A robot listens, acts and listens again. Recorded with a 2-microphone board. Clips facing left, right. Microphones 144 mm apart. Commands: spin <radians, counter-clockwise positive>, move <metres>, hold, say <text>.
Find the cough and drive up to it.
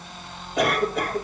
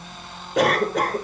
spin -1.57
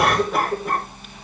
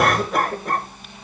move 1.0
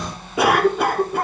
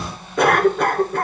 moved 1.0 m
spin 0.17
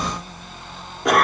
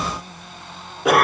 move 1.0
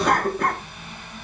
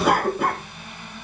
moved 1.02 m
move 1.0
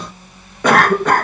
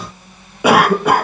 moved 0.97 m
spin -0.17
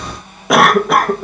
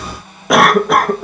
move 1.0
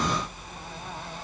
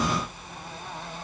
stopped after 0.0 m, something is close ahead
hold
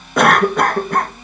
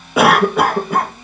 say Arrived at the cough, straight ahead.